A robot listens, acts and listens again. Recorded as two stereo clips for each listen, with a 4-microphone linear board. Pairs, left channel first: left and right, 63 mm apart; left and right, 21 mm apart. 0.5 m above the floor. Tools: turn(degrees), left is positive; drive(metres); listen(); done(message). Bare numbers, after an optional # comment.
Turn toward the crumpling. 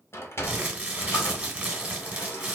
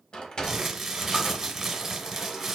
# The crumpling: about 20° right or 160° right.
turn(-20)
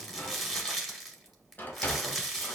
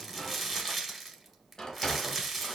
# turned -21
done("Found it: crumpling, straight ahead, 1 to 2 m away.")